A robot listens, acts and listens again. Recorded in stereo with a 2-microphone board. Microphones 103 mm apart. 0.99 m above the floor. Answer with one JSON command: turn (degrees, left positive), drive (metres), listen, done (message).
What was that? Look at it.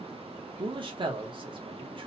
{"turn": -50}
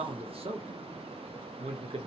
{"turn": -75}
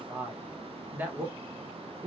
{"turn": -15}
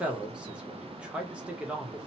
{"turn": -10}
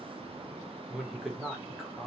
{"done": "Facing the man speaking."}